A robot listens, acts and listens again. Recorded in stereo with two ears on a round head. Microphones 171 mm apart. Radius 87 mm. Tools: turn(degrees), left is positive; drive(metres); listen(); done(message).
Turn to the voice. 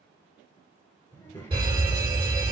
turn(degrees=30)
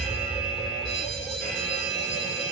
listen()
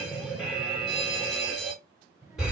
turn(degrees=-20)
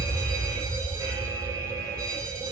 listen()
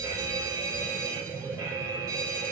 done("Found it: a child speaking, straight ahead.")